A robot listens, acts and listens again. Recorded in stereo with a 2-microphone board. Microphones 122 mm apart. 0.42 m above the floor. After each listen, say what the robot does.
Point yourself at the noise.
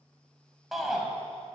Turn 30° left.
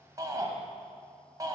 Turn 30° right.
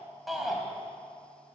Found it: a shout, straight ahead.